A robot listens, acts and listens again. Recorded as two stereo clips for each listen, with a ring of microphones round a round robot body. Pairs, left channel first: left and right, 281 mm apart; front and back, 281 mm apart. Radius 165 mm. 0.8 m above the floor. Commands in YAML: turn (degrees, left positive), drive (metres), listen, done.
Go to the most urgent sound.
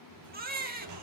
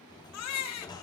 turn: -30
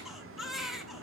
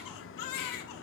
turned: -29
drive: 1.0
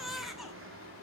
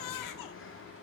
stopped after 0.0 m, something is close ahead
done: "Something is in my way. I am facing the baby crying but have not reached it."